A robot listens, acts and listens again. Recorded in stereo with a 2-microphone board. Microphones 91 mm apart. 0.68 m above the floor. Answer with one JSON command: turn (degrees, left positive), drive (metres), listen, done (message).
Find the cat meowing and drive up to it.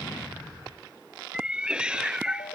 {"turn": -30}
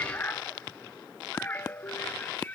{"turn": 20}
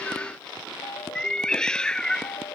{"turn": 10}
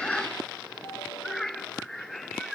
{"drive": 1.0}
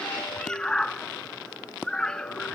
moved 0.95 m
{"turn": 10}
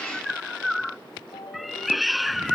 {"drive": 1.0}
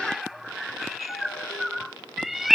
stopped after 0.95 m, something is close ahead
{"done": "I am next to the cat meowing."}